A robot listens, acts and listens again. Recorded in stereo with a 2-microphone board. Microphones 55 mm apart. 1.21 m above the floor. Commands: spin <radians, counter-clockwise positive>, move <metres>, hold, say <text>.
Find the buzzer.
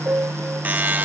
spin -0.52
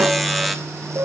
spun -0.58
say Found it: a buzzer, straight ahead, 1 to 2 m away.